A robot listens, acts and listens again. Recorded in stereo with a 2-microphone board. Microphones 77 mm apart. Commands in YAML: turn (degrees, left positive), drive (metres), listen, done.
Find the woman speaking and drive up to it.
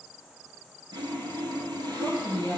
turn: 50
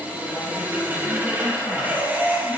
listen: true
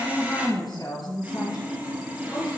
turn: 75
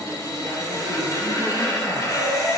listen: true
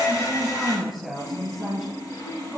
drive: 1.0
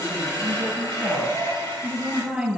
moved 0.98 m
drive: 1.0
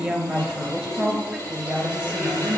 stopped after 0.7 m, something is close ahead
done: "I am next to the woman speaking."